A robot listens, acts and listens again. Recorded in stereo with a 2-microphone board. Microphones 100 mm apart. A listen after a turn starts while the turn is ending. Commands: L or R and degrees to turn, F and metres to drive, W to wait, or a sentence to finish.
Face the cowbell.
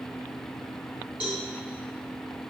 R30
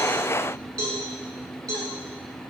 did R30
R140
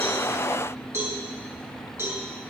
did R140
R20
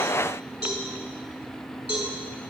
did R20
R10
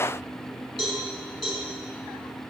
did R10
Facing the cowbell.